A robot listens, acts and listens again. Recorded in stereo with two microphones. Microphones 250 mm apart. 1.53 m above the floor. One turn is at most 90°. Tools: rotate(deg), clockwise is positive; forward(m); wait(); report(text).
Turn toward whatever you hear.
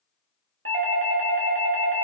rotate(55)
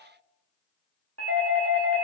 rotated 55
rotate(70)
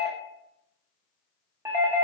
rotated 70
rotate(10)
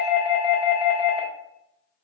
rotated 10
report("Facing the doorbell.")